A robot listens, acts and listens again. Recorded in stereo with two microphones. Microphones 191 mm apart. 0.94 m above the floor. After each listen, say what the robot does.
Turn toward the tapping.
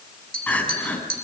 Turn 50° right.
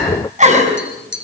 Turn 80° right.
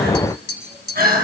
Found it: tapping, straight ahead.